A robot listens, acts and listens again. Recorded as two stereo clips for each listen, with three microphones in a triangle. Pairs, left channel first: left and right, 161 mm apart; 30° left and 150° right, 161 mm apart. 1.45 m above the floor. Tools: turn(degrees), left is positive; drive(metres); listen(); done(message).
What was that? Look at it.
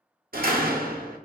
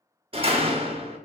turn(degrees=-100)
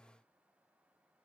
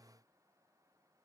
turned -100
done("I heard a door slam from this way, but can't make it out now.")